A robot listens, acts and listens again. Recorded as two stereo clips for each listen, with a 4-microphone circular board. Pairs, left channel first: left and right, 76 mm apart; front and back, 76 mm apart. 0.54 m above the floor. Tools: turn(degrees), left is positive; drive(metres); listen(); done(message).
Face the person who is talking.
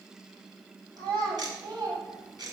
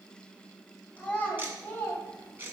turn(degrees=-65)
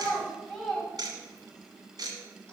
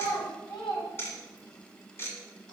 turn(degrees=10)
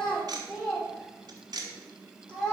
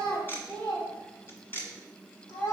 turn(degrees=15)
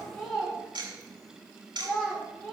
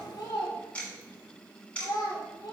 done("Facing the child speaking.")